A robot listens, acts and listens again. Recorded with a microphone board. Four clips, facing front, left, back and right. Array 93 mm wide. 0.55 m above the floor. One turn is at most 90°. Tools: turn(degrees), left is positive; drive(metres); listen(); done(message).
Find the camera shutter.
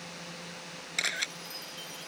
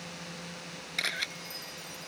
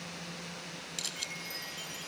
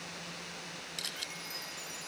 turn(degrees=40)
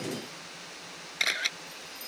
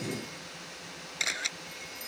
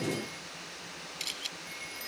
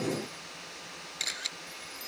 turn(degrees=20)
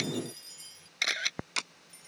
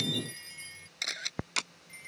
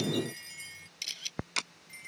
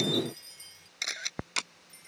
done("Found it: a camera shutter, straight ahead.")